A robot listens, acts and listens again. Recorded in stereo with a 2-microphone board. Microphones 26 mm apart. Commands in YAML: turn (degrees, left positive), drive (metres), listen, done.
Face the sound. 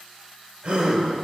turn: -55
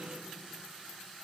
listen: true
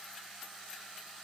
done: "I heard a gasp, but can't make it out now. It was about straight ahead or 70° right."